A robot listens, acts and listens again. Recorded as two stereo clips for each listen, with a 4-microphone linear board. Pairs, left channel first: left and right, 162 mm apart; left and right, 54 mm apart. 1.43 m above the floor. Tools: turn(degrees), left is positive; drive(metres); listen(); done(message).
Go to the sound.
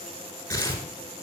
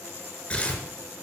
turn(degrees=20)
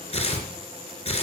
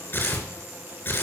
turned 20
turn(degrees=140)
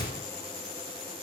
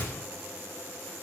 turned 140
turn(degrees=35)
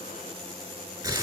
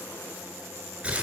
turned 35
turn(degrees=-20)
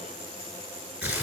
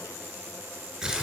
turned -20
turn(degrees=-10)
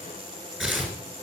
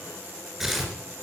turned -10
drive(metres=1.0)
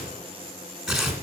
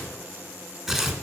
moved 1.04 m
drive(metres=1.0)
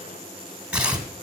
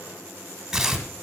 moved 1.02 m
turn(degrees=-10)
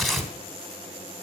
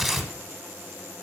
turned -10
drive(metres=1.0)
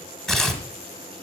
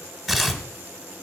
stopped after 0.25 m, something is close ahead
done("I am next to the tearing paper.")